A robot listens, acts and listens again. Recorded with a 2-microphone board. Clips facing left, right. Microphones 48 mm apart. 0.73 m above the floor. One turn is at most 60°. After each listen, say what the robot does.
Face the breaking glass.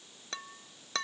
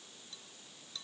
Turn 60° left.
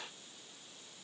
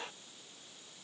Keep listening.
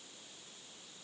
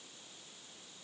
I heard breaking glass, but can't make it out now. It was about 10° left or 50° left.